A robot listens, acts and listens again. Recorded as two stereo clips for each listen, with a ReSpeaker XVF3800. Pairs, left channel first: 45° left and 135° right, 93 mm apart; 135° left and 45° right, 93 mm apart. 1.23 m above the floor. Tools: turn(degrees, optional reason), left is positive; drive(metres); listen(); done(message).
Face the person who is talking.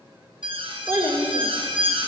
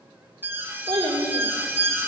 turn(degrees=-80, reason="The child speaking: 80° right.")
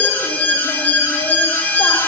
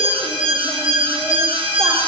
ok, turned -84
listen()
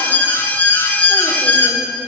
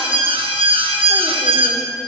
listen()
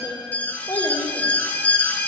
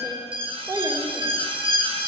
done("Facing the child speaking.")